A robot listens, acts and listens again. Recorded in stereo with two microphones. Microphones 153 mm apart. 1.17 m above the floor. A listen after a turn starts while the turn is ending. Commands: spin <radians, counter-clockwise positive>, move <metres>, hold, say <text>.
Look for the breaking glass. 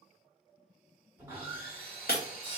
spin 1.22
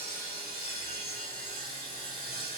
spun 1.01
hold
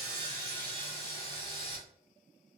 say I heard breaking glass, but can't make it out now. It was about 15° left or 50° left.